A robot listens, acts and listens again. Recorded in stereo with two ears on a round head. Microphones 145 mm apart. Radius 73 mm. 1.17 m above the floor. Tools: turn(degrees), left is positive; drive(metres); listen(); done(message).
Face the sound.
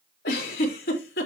turn(degrees=70)
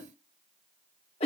turn(degrees=40)
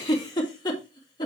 turn(degrees=25)
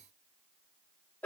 turn(degrees=10)
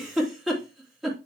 done("Facing the giggle.")